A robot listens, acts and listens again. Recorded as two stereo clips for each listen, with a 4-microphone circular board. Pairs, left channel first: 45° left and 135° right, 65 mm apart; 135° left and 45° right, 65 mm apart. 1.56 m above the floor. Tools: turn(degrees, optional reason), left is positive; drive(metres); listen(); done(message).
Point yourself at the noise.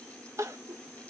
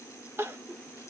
turn(degrees=-95, reason="The crying: 95° right.")
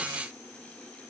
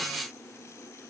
listen()
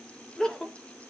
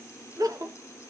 turn(degrees=-30, reason="The crying is now 30° right.")
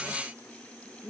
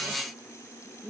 done("Facing the crying, 1 to 2 m away.")